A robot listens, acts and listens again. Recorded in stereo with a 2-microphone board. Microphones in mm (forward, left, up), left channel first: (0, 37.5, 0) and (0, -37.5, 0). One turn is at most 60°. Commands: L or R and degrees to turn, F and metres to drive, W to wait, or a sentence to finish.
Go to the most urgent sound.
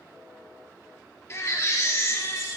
L40
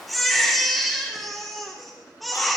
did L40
F1.0
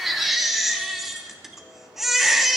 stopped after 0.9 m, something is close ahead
I am next to the baby crying.